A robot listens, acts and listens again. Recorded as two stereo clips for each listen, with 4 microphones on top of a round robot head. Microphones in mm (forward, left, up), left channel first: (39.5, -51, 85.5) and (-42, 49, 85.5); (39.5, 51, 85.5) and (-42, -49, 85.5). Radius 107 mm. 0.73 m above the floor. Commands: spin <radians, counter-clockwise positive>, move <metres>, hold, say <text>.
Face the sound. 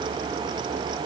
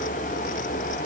hold
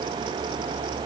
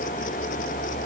hold
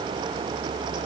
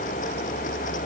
say I can't make out anything.